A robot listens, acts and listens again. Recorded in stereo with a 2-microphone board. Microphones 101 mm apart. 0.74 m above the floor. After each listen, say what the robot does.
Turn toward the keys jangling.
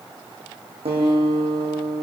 Keep listening.
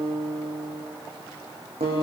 Keep listening.
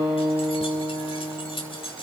Turn 60° left.
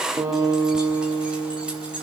Keep listening.
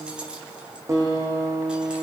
Keep listening.
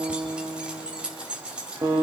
Turn 10° right.
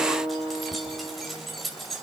Found it: keys jangling, straight ahead, 2 to 4 m away.